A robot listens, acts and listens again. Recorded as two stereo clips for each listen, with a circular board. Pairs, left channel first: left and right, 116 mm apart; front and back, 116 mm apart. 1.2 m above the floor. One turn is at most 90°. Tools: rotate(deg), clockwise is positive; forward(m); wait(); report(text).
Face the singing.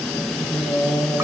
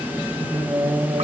rotate(-90)
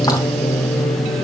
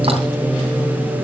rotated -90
rotate(-90)
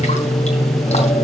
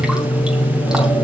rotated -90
rotate(-60)
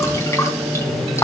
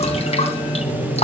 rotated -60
rotate(10)
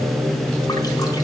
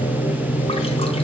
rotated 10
report("Found it: singing, straight ahead, over 4 m away.")